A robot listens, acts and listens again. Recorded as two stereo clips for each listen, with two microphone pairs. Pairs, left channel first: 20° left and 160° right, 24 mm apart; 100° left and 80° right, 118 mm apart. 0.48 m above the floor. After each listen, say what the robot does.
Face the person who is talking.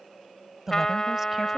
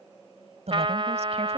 Turn 90° right.
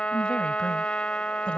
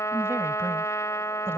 Keep listening.
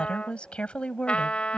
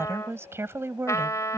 Turn 10° right.
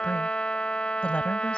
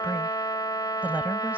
Keep listening.
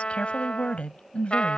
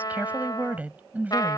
Found it: a woman speaking, straight ahead.